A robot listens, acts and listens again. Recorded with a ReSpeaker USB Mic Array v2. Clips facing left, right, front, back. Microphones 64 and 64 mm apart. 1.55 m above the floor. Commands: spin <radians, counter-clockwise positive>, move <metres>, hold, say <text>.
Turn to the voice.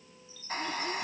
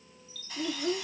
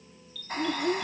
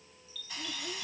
spin -0.87
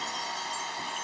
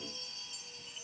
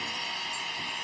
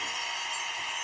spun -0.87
hold
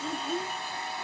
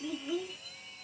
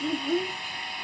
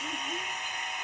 say Found it: a child speaking, straight ahead.